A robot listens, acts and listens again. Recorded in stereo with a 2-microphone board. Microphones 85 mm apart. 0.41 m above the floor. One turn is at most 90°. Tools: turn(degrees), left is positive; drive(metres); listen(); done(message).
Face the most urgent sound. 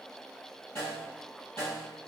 listen()
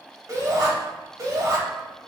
turn(degrees=-40)
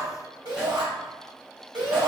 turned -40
turn(degrees=-90)
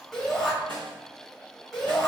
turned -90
done("Found it: a shout, straight ahead.")